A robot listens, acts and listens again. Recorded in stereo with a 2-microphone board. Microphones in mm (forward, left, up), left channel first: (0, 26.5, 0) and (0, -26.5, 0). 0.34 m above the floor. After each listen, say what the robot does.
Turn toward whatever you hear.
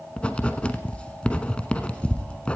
Turn 20° left.
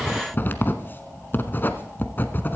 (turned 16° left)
Turn 140° left.
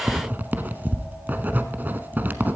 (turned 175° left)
Turn 35° right.
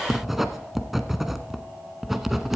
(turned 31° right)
Facing the writing.